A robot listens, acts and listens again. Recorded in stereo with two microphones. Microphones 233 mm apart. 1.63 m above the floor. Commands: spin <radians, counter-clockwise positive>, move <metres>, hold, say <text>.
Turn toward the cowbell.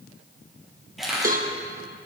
spin -0.61
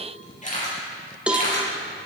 say Facing the cowbell, 1 to 2 m away.